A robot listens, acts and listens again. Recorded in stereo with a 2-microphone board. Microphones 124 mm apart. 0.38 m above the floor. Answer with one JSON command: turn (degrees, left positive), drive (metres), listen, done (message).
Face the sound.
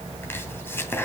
{"turn": 20}
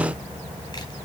{"listen": true}
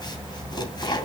{"turn": 140}
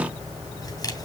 {"listen": true}
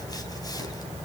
{"listen": true}
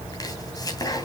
{"turn": 30}
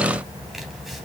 {"listen": true}
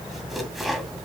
{"done": "Found it: chopping, straight ahead."}